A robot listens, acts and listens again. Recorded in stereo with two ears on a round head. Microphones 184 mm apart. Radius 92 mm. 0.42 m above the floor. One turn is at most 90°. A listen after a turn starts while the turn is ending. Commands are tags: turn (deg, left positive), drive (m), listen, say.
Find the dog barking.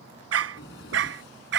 <turn deg="-60"/>
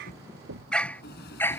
<turn deg="10"/>
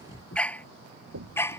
<turn deg="15"/>
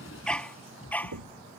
<turn deg="10"/>
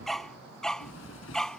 <say>Facing the dog barking.</say>